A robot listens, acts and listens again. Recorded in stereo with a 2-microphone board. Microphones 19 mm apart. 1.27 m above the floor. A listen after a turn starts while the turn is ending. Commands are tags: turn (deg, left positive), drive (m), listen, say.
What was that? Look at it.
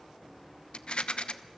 <turn deg="65"/>
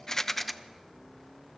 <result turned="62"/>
<say>Facing the rattle.</say>